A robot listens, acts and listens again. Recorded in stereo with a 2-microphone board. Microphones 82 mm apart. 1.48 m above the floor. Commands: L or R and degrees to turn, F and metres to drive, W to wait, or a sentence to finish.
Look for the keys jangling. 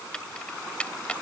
L15
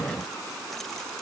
W
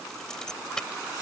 L30
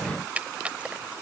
R15
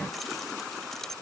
Found it: keys jangling, straight ahead.